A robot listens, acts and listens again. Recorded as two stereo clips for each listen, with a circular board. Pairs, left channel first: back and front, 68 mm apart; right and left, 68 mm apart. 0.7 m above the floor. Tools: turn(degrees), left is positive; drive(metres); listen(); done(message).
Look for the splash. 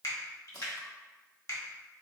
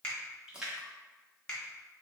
turn(degrees=165)
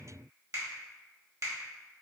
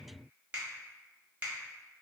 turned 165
done("I heard a splash from this way, but can't make it out now.")